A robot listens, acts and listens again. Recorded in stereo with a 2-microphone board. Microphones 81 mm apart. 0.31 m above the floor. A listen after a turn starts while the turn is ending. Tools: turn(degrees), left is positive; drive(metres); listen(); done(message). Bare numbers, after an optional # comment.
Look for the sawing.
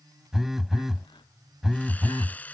# The sawing: about 20° left or 160° left.
turn(20)
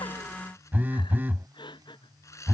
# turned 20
# So it is at 140° left.
turn(140)
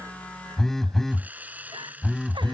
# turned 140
# The sawing is now 20° right.
turn(-20)
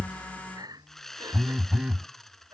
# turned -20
done("Found it: sawing, straight ahead.")